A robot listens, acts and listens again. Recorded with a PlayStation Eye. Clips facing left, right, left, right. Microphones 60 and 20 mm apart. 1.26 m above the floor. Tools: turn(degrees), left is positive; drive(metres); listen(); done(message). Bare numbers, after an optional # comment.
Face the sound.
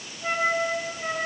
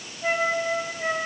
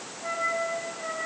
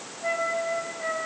# The flute: about 25° right or 155° right.
turn(-25)
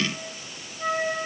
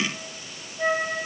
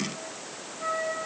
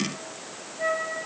# So it is at 130° right.
turn(-130)
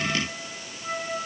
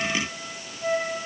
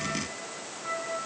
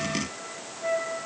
# The flute is now 60° right.
turn(-60)
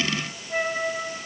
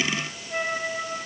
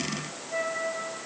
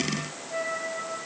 # The flute is now 10° left.
turn(10)
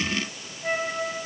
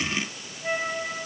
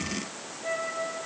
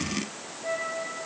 done("Found it: a flute, straight ahead.")